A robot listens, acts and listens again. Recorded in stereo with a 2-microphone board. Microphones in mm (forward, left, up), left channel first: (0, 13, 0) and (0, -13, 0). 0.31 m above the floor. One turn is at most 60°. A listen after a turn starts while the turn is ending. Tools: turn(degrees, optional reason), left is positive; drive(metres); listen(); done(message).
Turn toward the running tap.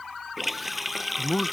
turn(degrees=-30)
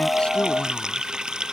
turn(degrees=-60, reason="So it is at 145° right.")
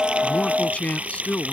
turn(degrees=-60, reason="The running tap is now 100° right.")
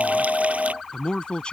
turn(degrees=-40, reason="Nothing new. It was at 40° right.")
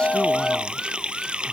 turn(degrees=-45, reason="The running tap is now 45° right.")
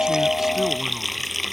done("Found it: a running tap, straight ahead.")